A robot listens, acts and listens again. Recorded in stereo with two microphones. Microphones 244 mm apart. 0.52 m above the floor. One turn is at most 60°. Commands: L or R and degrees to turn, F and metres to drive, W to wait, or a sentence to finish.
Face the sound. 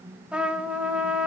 R30
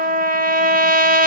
R60
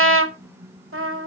R60
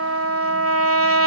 R60
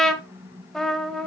Facing the trumpet, 1 to 2 m away.